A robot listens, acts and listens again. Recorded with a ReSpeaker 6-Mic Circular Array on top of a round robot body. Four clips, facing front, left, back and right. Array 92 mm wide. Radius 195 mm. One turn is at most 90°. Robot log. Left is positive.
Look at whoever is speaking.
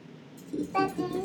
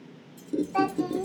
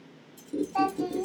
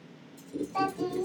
note: The child speaking: 30° left.
cmd yaw +30
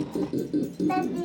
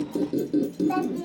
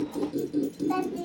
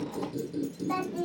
end: Found it: a child speaking, straight ahead, 1 to 2 m away.